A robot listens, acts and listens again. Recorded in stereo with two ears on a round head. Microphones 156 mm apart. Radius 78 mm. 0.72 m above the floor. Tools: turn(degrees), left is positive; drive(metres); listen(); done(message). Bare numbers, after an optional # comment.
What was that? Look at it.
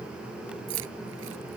turn(-90)
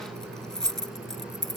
done("Facing the keys jangling.")